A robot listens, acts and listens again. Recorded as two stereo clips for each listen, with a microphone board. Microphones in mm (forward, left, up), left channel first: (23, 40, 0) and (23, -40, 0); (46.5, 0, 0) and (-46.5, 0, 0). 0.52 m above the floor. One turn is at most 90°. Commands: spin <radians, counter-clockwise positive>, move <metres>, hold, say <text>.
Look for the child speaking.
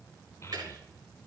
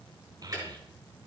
spin 1.57
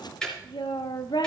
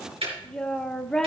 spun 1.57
spin 1.40
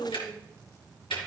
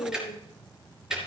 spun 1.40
say Found it: a child speaking, straight ahead, 1 to 2 m away.